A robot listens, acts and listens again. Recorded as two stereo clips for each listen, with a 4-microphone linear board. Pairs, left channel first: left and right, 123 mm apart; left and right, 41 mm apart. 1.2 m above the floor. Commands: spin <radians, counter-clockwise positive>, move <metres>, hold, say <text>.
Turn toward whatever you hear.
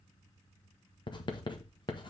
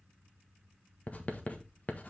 spin 0.70
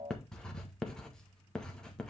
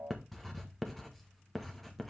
say Facing the writing.